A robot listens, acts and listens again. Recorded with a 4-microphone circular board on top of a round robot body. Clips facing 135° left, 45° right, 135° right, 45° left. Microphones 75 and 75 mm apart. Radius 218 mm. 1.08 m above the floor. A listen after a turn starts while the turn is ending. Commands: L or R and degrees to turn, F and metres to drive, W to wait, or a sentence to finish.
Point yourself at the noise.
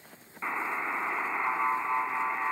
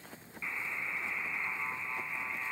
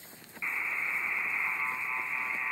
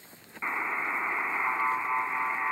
L95
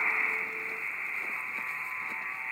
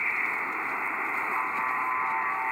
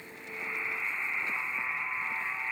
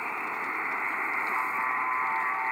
Found it: a buzzer, straight ahead.